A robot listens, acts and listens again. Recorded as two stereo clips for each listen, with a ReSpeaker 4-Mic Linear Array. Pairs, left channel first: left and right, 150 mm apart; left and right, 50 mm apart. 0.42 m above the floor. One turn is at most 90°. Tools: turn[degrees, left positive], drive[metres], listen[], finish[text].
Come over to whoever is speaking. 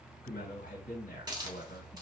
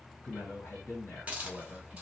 Thought: The man speaking: about 60° left or 120° left.
Action: turn[60]
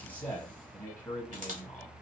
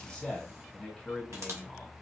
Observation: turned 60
Thought: So it is at 10° left.
Action: turn[10]
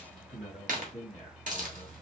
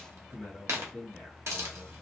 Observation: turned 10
Action: drive[1.0]
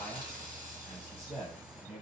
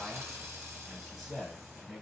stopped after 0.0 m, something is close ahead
Action: finish[Something is in my way. I am facing the man speaking but have not reached it.]